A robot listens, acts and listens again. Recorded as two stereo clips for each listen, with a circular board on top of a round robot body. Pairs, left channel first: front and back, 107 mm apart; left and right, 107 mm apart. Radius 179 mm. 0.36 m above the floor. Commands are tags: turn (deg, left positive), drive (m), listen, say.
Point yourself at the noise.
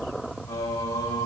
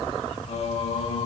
<turn deg="55"/>
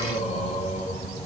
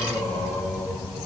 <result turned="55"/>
<say>Facing the singing, 2 to 4 m away.</say>